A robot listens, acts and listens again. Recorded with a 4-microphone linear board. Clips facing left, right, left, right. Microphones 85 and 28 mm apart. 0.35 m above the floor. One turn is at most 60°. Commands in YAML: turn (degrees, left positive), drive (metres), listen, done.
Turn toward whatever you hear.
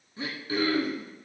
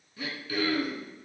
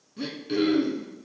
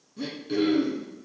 turn: 30
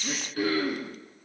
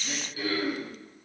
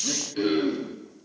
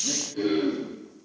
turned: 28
turn: 60
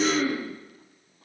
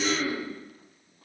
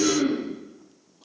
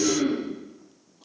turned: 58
turn: 60
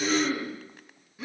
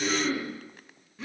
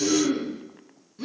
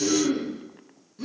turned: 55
done: "Found it: throat clearing, straight ahead."